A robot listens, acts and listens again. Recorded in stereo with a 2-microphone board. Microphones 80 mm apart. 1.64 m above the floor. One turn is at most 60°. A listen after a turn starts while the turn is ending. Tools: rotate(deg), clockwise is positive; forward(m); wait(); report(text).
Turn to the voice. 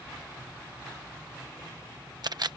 wait()
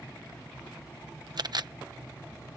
wait()
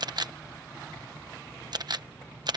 report("I can't make out anyone speaking to turn to.")